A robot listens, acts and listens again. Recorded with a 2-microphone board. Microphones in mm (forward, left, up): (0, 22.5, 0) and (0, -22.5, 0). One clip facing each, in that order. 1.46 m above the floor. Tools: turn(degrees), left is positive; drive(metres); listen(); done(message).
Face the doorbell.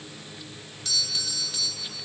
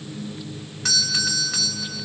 turn(degrees=-90)
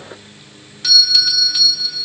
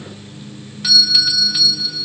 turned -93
done("Facing the doorbell.")